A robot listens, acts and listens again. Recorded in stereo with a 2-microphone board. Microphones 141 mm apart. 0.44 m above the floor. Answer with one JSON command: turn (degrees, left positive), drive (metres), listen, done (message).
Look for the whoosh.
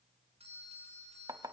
{"listen": true}
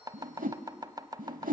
{"turn": -90}
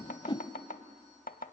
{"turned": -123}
{"turn": 40}
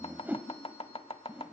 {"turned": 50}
{"turn": -10}
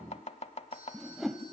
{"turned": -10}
{"done": "Facing the whoosh, under 1 m away."}